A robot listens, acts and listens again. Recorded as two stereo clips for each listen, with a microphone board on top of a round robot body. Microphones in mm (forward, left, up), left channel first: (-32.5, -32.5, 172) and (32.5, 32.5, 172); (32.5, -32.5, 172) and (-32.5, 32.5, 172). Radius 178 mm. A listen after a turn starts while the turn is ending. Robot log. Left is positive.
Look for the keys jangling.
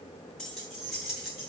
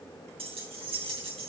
note: The keys jangling: 130° left.
cmd yaw +130
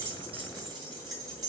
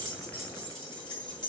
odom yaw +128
end: Facing the keys jangling.